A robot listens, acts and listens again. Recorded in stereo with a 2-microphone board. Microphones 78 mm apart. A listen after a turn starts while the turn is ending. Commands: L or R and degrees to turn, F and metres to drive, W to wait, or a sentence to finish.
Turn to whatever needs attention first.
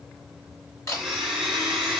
W
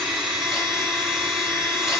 W
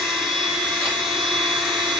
I can't make out anything urgent, only a blender and a camera shutter.